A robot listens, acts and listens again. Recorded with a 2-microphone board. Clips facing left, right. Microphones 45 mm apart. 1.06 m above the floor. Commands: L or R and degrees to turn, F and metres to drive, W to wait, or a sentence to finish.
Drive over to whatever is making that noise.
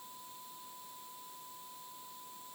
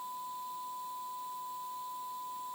W
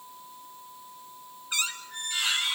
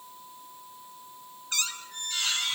L15
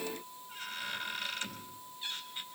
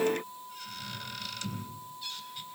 L150
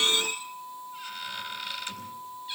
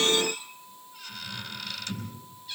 L20
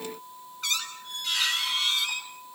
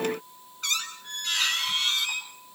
F1.0
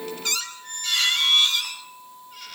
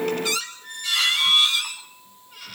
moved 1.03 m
F1.0
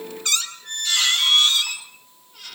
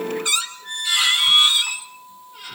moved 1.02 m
R15
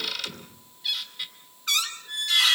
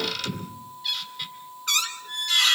F1.0
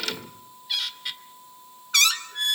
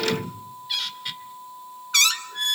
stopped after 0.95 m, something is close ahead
I am next to the squeak.